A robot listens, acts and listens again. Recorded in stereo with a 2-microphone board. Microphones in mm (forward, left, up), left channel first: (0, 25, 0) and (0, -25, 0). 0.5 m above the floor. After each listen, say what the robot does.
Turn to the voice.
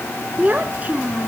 Turn 30° right.
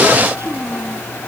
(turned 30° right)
Turn 125° right.
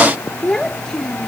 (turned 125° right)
Turn 10° left.
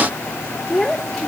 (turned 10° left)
Found it: a child speaking, straight ahead.